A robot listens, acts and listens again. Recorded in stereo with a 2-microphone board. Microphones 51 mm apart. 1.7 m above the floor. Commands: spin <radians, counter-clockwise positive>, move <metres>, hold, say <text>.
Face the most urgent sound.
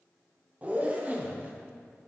hold
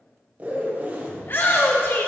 spin 0.79
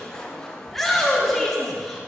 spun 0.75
say Facing the shout.